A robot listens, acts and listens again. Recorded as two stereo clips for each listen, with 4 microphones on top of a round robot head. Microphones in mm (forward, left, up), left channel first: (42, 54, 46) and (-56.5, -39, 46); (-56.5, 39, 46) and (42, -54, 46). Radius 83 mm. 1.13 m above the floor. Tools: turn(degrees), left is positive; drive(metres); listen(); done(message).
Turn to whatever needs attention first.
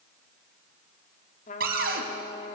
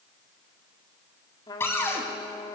listen()
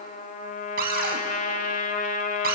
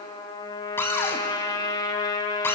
listen()
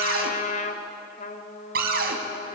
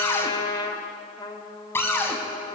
done("I can't make out anything urgent, only a trumpet and a cupboard door.")